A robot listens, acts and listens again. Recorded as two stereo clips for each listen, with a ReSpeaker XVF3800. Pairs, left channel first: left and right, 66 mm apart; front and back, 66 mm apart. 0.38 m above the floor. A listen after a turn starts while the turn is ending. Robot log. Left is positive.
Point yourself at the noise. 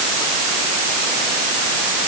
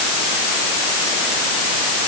cmd idle
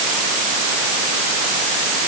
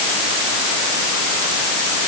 cmd idle
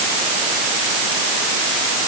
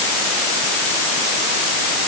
end: I can't make out anything.